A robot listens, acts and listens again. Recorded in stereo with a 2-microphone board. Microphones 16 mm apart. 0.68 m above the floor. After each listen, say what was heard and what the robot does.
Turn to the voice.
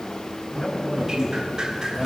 The man speaking: about 35° left or 145° left. Turn 35° left.
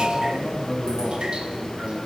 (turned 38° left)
Facing the man speaking, over 4 m away.